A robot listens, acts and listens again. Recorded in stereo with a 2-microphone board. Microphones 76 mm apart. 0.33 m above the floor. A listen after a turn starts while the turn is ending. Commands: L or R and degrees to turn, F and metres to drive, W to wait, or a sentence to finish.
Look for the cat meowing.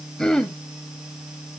W
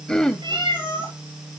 R90
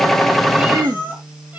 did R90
R15
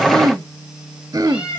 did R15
R10
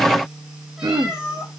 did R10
Found it: a cat meowing, straight ahead.